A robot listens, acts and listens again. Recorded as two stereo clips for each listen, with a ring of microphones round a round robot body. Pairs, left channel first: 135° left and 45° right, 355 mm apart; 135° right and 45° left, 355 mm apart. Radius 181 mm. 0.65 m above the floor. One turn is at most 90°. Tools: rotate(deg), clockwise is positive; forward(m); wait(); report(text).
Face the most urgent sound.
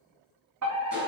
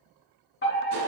rotate(80)
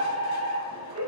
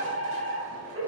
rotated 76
report("Found it: a fire alarm, straight ahead, 2 to 4 m away.")